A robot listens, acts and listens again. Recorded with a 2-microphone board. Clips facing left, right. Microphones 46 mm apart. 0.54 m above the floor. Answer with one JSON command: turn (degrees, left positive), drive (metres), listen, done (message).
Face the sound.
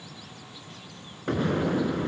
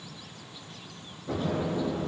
{"turn": 65}
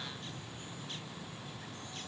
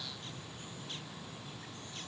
{"listen": true}
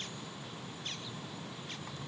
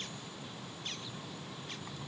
{"done": "I heard an explosion, but can't make it out now. It was about straight ahead or 50° left."}